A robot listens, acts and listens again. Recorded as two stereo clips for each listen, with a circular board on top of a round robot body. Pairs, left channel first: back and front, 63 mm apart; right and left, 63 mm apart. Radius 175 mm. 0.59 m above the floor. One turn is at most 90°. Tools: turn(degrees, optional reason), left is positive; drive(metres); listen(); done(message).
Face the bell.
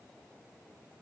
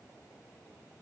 listen()
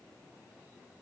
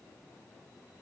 listen()
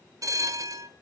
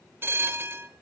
turn(degrees=35, reason="The bell: 35° left.")
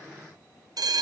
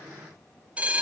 turn(degrees=20, reason="The bell is now 20° left.")
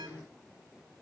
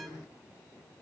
listen()
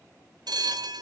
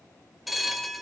done("Facing the bell, 1 to 2 m away.")